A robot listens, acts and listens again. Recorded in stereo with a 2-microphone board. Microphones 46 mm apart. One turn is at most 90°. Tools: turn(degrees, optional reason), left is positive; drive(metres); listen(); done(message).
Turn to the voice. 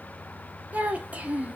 turn(degrees=-35, reason="The child speaking: about 35° right or 145° right.")
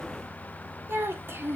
turn(degrees=-90, reason="So it is at 110° right.")
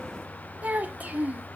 turn(degrees=-40, reason="The child speaking is now 40° right.")
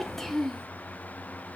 turn(degrees=10, reason="The child speaking is now 10° left.")
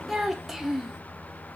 done("Found it: a child speaking, straight ahead, 1 to 2 m away.")